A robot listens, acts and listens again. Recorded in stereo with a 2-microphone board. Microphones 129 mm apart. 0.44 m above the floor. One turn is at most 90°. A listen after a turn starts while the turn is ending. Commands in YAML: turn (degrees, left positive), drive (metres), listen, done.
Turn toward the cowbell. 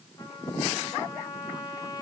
listen: true
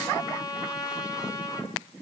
listen: true
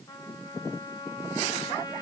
done: "I can't make out a cowbell to turn to."